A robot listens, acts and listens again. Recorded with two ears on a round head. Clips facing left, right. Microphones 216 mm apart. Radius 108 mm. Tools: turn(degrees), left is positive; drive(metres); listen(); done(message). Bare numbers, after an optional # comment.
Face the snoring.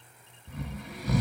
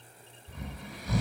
# The snoring: about 55° left or 125° left.
turn(55)
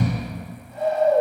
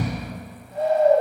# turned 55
# So it is at 75° left.
turn(75)
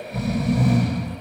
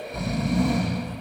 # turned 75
done("Facing the snoring.")